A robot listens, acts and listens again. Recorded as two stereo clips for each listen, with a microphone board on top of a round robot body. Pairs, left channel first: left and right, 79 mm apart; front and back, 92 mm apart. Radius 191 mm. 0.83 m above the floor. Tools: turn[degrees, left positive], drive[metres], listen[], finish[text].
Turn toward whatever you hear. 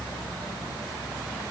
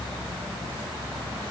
Action: listen[]
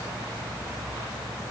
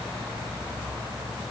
Action: listen[]
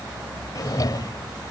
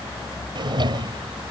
Thought: The drawer: 140° left.
Action: turn[140]
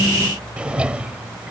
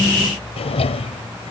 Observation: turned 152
Thought: The drawer is now 15° right.
Action: turn[-15]
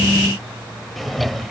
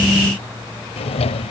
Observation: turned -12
Action: finish[Found it: a drawer, straight ahead.]